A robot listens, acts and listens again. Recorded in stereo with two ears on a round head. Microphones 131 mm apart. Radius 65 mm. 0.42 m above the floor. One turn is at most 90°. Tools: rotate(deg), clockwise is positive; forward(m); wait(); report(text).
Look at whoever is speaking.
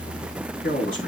rotate(-65)
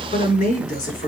rotate(-60)
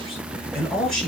report("Found it: a man speaking, straight ahead.")